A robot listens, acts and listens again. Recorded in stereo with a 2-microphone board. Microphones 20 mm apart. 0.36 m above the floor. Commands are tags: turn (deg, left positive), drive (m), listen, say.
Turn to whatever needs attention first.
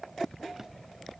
<listen/>
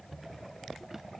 <listen/>
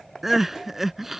<turn deg="-30"/>
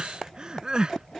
<turn deg="-140"/>
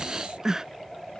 <turn deg="-30"/>
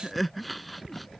<say>Found it: crying, straight ahead.</say>